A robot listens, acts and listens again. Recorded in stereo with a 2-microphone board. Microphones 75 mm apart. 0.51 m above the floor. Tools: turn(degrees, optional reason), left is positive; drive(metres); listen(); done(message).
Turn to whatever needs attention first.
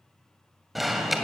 turn(degrees=30)
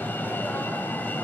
turn(degrees=155, reason="So it is at 155° left.")
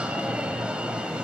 turn(degrees=-15, reason="The alarm is now 15° right.")
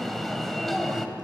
done("Facing the alarm, 2 to 4 m away.")